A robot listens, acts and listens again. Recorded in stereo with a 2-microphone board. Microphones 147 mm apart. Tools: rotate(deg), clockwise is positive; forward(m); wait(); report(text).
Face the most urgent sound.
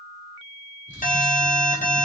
rotate(-60)
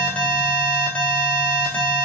rotate(-10)
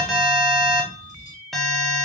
report("Facing the alarm, under 1 m away.")